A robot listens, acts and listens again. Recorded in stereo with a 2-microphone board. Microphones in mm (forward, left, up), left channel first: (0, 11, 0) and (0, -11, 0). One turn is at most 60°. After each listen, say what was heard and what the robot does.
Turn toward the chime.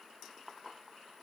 Keep listening.
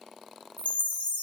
Turn 60° left.
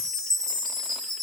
So it is at 20° left. Turn 20° left.
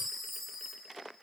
Found it: a chime, straight ahead, 2 to 4 m away.